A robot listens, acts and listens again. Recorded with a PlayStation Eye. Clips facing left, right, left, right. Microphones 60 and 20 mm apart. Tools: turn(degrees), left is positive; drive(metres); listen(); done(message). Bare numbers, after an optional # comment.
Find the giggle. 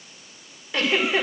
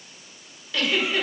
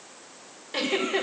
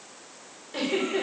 # The giggle: about 25° left or 155° left.
turn(25)
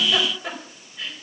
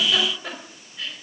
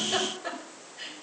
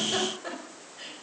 done("Found it: a giggle, straight ahead.")